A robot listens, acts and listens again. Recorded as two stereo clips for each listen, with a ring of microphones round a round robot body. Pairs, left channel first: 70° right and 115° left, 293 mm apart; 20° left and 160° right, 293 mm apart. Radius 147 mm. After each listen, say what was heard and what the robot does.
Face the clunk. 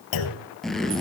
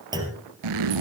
The clunk: 80° right. Turn 80° right.
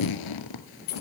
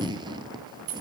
I heard a clunk from this way, but can't make it out now.